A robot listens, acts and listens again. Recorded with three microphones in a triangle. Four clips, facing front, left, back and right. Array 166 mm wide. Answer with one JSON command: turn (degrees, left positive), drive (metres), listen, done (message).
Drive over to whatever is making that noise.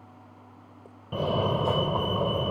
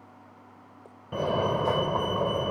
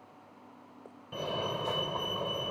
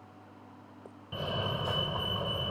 {"turn": 50}
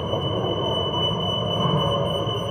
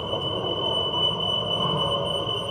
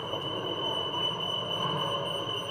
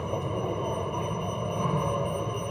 {"turn": 15}
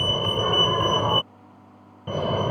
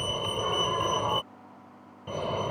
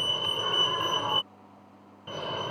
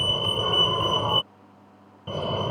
{"drive": 1.0}
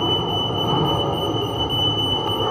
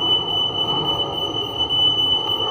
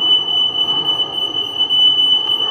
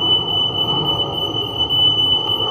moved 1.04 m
{"drive": 1.0}
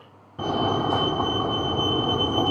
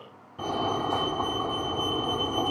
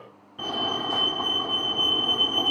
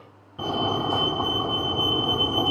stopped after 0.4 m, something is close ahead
{"turn": -10}
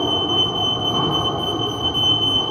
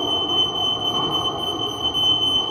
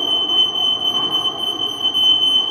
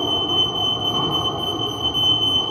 {"done": "Arrived at the fire alarm, straight ahead."}